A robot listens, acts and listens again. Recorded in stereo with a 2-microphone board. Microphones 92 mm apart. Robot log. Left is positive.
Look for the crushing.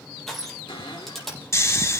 cmd yaw +30
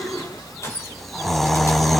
cmd idle
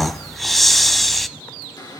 cmd idle
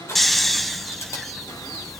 note: So it is at 145° left.
cmd yaw +145
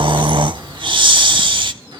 cmd idle
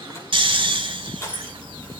note: The crushing is now 35° left.
cmd yaw +35
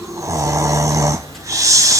cmd idle
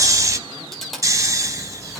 cmd idle
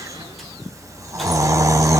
end: Facing where the crushing came from. I can't hear it now.